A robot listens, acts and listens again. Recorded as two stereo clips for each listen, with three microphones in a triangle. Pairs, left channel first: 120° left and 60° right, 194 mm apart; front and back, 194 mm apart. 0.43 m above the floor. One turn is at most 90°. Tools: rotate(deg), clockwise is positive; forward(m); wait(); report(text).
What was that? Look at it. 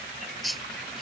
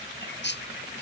rotate(-30)
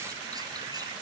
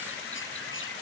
wait()
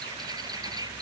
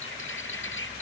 rotate(-10)
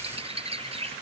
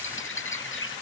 report("Found it: a bird, straight ahead.")